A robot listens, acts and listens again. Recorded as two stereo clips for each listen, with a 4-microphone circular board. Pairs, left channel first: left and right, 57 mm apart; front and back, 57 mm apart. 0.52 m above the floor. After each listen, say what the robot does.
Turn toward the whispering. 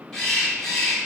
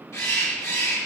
Keep listening.
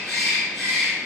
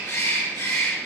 Keep listening.
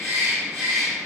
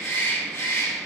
I can't make out whispering to turn to.